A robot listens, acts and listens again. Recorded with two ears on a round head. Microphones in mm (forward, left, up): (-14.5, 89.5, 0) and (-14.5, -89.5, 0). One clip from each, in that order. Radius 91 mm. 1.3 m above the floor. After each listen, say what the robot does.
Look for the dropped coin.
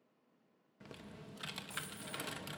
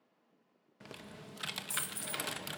Turn 90° right.
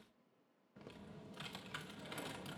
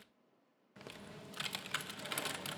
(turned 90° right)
I heard a dropped coin from this way, but can't make it out now.